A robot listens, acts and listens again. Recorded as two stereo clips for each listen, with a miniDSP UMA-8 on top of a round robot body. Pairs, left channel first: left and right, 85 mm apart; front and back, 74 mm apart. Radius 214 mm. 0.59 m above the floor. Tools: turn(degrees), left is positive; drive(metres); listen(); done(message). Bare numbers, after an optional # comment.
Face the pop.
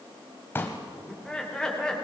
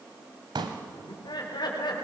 # The pop: 155° left.
turn(155)
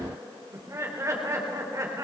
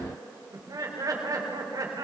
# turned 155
done("Facing where the pop came from. I can't hear it now.")